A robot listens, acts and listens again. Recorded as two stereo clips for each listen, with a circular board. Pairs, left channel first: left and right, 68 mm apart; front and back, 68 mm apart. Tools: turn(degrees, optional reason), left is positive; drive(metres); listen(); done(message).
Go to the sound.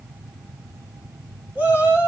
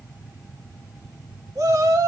turn(degrees=-155, reason="The shout: 155° right.")
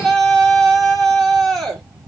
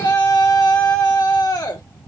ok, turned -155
drive(metres=1.0)
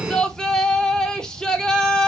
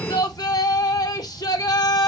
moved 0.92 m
turn(degrees=10, reason="The shout is now 10° left.")
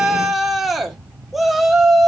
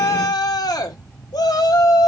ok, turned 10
drive(metres=1.0)
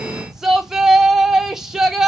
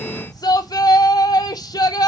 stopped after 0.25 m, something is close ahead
done("Arrived at the shout, straight ahead.")